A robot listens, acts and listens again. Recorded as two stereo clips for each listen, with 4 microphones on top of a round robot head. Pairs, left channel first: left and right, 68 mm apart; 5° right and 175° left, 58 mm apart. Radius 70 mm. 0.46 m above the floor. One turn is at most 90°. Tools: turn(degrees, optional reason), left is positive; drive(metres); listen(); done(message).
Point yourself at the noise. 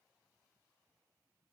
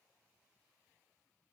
listen()
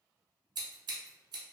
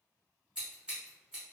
turn(degrees=-90, reason="The scissors: 105° right.")
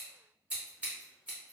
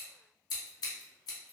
turn(degrees=-15, reason="The scissors is now 15° right.")
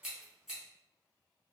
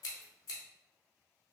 done("Facing the scissors.")